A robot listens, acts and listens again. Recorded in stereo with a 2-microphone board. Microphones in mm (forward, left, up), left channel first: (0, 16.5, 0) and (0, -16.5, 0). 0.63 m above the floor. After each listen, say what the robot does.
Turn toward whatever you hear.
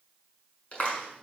Turn 40° left.
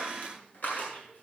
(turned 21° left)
Turn 115° left.
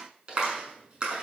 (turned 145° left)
Turn 30° right.
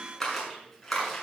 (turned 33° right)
Found it: a clap, straight ahead.